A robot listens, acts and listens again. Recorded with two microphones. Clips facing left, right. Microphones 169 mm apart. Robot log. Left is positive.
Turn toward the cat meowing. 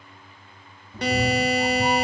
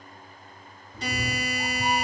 note: The cat meowing: about 40° left or 140° left.
cmd yaw +40
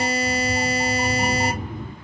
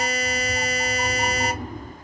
end: Found it: a cat meowing, straight ahead.